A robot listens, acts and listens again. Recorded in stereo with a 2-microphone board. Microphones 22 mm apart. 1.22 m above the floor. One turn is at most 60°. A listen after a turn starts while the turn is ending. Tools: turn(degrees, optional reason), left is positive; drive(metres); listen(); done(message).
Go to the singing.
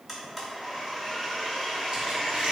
listen()
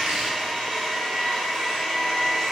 listen()
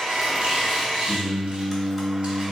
turn(degrees=20, reason="The singing: about 20° left or 160° left.")
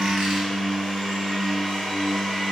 drive(metres=1.0)
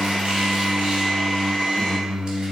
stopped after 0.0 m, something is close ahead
turn(degrees=10, reason="The singing is now 10° left.")
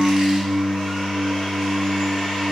done("Blocked. The singing is further on, straight ahead.")